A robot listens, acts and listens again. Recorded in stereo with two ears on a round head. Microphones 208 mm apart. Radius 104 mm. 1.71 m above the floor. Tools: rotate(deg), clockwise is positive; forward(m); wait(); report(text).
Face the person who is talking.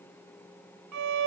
wait()
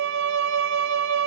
wait()
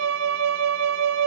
report("I can't make out anyone speaking to turn to.")